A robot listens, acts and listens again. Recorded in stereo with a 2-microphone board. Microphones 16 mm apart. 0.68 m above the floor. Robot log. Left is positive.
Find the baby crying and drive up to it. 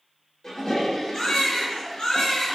note: The baby crying: about 75° left or 105° left.
cmd yaw +75
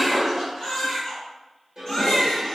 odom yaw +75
note: So it is at 30° left.
cmd yaw +30
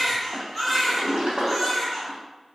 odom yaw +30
cmd fwd 1.0
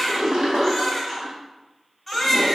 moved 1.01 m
cmd fwd 1.0
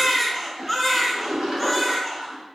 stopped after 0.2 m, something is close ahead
end: I am next to the baby crying.